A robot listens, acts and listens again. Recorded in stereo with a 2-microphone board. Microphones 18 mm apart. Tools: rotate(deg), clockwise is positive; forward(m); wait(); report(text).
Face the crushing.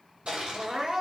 rotate(90)
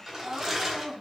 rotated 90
rotate(10)
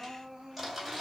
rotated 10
report("Facing the crushing.")